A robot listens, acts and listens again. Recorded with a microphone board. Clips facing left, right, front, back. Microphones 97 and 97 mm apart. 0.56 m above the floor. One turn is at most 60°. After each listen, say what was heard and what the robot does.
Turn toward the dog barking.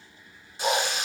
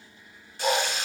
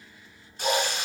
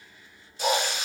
The dog barking: straight behind. Turn 60° left.
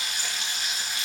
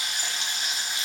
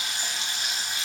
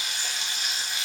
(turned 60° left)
Nothing new. It was at 120° left. Turn 60° left.
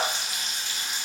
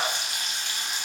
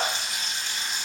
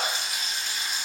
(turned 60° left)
Nothing new. It was at 60° left. Turn 60° left.
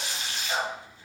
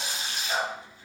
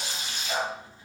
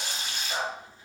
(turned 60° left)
Found it: a dog barking, straight ahead, 1 to 2 m away.